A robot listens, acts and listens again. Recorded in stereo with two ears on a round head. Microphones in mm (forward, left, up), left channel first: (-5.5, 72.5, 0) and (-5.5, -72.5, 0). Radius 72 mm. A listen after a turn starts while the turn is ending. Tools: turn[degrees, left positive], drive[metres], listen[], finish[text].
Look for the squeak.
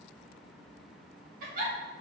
Action: listen[]
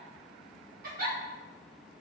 Action: listen[]
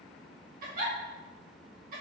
Action: finish[I can't make out a squeak, only a giggle.]